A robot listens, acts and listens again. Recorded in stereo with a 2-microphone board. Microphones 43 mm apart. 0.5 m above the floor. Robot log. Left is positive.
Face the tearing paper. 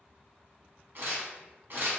note: The tearing paper: about 55° right or 125° right.
cmd yaw -55
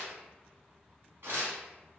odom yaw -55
note: So it is at 70° right.
cmd yaw -70
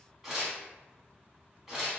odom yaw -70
note: The tearing paper is now 10° right.
cmd yaw -10
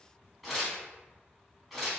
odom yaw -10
end: Found it: tearing paper, straight ahead.